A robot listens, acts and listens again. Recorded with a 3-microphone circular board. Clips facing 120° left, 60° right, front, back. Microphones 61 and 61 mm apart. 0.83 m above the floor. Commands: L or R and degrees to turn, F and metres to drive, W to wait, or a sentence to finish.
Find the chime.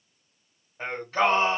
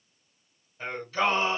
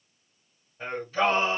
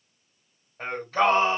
W
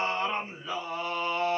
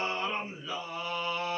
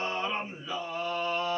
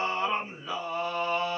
W
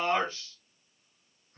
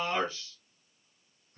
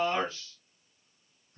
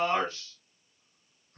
I can't make out a chime, only singing.